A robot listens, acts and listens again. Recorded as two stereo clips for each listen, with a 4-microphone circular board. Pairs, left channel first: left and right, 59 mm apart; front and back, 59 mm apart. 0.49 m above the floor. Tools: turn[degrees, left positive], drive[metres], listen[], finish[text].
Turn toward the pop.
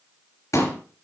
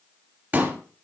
Thought: The pop: 120° left.
Action: turn[120]
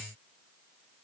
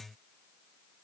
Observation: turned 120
Action: finish[Facing where the pop came from. I can't hear it now.]